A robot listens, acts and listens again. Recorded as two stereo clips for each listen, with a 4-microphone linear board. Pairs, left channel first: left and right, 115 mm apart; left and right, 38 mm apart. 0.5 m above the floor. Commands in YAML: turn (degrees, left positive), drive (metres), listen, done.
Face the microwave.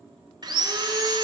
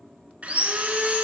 listen: true
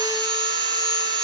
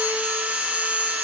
listen: true
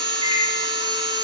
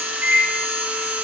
turn: -60
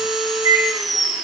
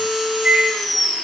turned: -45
turn: -40
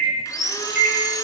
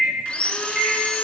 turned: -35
done: "Found it: a microwave, straight ahead, 1 to 2 m away."